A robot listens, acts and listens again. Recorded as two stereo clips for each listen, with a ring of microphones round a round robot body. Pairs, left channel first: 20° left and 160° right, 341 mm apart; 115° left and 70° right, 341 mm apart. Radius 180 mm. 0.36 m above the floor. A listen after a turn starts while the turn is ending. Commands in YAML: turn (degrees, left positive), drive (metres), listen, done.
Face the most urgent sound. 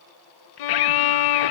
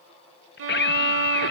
turn: 50
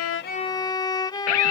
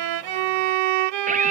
done: "Found it: a scream, straight ahead."